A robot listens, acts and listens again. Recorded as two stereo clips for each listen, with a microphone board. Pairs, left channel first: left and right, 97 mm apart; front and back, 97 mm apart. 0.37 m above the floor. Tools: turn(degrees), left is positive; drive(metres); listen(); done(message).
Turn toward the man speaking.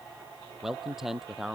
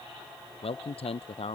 done("Facing the man speaking.")